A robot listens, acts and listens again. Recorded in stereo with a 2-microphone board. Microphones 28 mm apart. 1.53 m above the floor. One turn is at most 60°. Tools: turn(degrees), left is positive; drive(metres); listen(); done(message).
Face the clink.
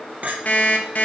turn(degrees=-55)
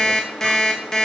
listen()
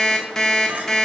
turn(degrees=-60)
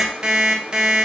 listen()
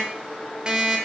listen()
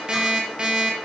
done("Facing where the clink came from. I can't hear it now.")